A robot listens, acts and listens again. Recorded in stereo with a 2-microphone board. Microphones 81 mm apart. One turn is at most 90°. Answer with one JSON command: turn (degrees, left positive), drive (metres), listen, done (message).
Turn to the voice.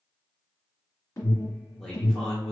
{"turn": 30}
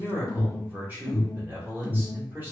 {"turn": -25}
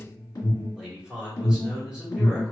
{"done": "Facing the man speaking, 1 to 2 m away."}